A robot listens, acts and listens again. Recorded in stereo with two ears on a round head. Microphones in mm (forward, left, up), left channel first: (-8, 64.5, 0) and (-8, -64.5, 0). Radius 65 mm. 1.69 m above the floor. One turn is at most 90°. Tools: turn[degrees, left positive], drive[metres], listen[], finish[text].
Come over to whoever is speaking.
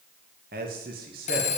Thought: The man speaking: about 70° right or 110° right.
Action: turn[-70]
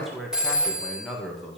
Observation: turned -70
Action: drive[1.0]
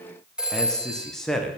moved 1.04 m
Action: drive[1.0]
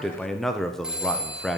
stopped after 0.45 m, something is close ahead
Action: finish[I am next to the man speaking.]